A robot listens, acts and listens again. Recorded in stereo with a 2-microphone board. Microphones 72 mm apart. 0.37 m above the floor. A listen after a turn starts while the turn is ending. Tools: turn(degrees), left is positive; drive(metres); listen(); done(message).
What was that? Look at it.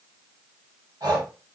turn(degrees=-70)
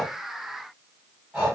turn(degrees=-15)
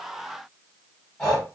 done("Found it: breathing, straight ahead, 1 to 2 m away.")